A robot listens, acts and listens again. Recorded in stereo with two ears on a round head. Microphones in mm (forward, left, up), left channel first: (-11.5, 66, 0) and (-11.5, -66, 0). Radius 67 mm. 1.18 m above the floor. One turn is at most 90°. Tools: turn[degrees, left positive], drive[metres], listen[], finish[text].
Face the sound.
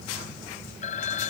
Thought: The phone ringing: about 55° left or 125° left.
Action: turn[55]
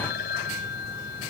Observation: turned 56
Thought: So it is at 70° left.
Action: turn[70]
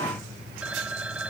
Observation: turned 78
Thought: The phone ringing is now 10° right.
Action: turn[-10]
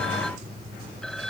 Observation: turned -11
Action: listen[]
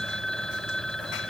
Action: finish[Found it: a phone ringing, straight ahead.]